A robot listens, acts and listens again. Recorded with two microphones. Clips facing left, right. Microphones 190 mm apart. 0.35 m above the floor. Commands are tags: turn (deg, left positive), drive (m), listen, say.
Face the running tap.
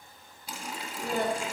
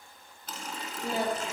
<turn deg="30"/>
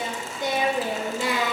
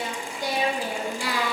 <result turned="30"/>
<turn deg="-20"/>
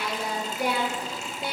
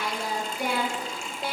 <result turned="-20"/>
<say>Found it: a running tap, straight ahead, 1 to 2 m away.</say>